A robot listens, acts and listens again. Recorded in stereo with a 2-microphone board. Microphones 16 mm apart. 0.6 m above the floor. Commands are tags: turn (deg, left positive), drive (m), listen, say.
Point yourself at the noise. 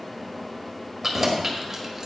<turn deg="-25"/>
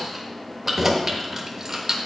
<turn deg="-35"/>
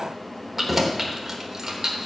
<turn deg="-35"/>
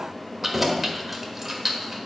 <turn deg="-15"/>
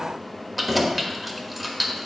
<say>Facing the keys jangling, 1 to 2 m away.</say>